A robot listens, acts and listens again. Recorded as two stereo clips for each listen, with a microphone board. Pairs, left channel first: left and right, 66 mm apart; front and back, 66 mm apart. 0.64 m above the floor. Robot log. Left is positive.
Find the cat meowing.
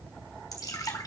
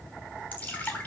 cmd idle
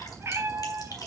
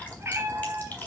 note: The cat meowing: 125° right.
cmd yaw -125
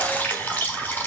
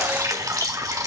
cmd idle
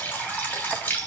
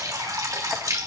cmd idle
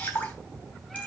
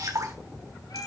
end: Found it: a cat meowing, straight ahead.